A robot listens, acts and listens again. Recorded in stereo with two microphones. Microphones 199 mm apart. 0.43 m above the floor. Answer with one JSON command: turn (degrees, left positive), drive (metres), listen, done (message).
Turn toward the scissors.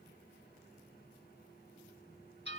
{"listen": true}
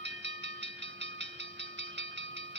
{"listen": true}
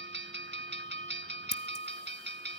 {"turn": 55}
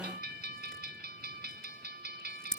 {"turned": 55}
{"done": "Facing the scissors."}